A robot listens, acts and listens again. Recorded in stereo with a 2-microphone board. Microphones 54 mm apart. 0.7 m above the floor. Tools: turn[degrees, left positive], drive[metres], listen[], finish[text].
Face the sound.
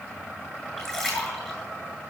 Action: turn[30]
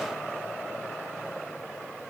Action: listen[]
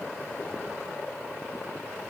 Action: finish[I heard a splash, but can't make it out now. It was about 20° right or 140° left.]